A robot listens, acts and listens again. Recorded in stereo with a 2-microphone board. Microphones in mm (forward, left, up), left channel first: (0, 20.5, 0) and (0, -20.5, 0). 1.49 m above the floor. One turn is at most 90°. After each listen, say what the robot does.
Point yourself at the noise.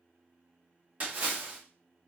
Turn 40° right.
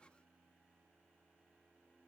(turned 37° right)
Keep listening.
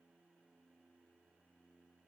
I heard a splash, but can't make it out now. It was about straight ahead or 105° right.